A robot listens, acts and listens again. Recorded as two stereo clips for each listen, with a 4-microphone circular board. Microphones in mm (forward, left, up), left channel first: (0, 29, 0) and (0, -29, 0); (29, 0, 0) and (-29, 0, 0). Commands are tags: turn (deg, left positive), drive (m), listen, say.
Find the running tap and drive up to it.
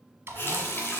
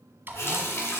<turn deg="40"/>
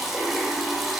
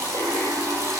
<drive m="1.0"/>
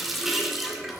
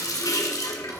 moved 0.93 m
<drive m="1.0"/>
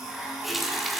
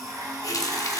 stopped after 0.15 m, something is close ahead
<say>I am next to the running tap.</say>